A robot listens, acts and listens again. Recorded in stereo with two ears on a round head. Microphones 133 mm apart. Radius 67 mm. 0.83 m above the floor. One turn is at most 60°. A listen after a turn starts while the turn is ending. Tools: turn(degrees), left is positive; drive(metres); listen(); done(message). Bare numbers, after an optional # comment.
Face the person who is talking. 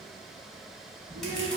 # The child speaking: about 65° right or 115° right.
turn(-60)
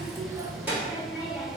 # So it is at 15° right.
turn(-15)
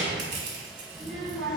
done("Facing the child speaking, 1 to 2 m away.")